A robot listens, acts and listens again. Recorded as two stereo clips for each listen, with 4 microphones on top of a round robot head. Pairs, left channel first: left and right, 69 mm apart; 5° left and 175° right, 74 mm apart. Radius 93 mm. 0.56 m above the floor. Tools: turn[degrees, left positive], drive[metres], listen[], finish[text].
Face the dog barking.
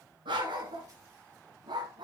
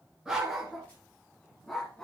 Thought: The dog barking: 75° right.
Action: turn[-75]
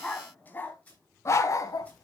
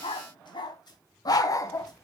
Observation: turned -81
Thought: The dog barking is now 55° left.
Action: turn[55]
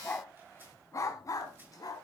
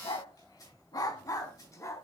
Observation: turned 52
Thought: The dog barking is now 55° left.
Action: turn[55]
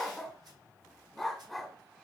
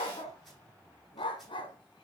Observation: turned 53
Action: finish[Facing the dog barking, 1 to 2 m away.]